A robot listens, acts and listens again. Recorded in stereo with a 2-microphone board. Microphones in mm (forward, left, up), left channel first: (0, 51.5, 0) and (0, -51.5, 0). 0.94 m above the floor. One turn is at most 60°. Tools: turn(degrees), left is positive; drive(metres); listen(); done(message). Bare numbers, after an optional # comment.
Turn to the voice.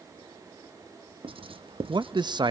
# The man speaking: about 50° right or 130° right.
turn(-50)
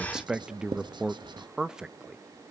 # So it is at 10° right.
turn(-10)
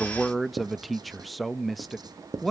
done("Facing the man speaking, under 1 m away.")